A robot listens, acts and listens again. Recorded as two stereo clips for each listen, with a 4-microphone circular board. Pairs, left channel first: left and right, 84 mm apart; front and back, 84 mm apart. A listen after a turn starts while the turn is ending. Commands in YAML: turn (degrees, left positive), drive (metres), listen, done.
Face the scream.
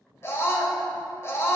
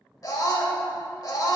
turn: 35
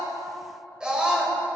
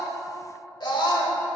turn: -10
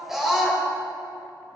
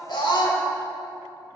done: "Found it: a scream, straight ahead, 1 to 2 m away."